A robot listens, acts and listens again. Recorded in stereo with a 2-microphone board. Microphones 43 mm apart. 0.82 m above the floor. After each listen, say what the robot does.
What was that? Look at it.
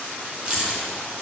Turn 20° right.
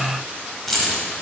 Found it: keys jangling, straight ahead, 2 to 4 m away.